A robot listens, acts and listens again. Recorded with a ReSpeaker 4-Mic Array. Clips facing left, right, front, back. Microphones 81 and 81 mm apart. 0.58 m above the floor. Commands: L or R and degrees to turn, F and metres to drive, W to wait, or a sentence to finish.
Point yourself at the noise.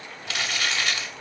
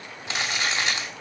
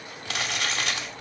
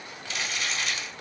R25
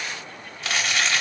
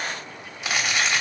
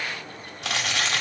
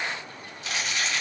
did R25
R10
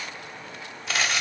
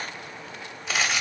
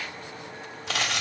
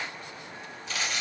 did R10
Facing the crumpling, 1 to 2 m away.